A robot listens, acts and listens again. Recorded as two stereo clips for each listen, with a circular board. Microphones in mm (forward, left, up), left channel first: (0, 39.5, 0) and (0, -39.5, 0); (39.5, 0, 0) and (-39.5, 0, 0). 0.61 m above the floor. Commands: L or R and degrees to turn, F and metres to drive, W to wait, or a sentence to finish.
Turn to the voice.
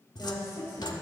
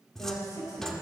L35
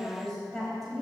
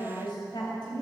Facing the woman speaking.